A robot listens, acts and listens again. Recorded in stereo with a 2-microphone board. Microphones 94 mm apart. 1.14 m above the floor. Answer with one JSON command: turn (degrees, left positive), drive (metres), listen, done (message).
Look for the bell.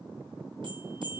{"turn": -55}
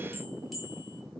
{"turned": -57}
{"done": "Facing the bell, over 4 m away."}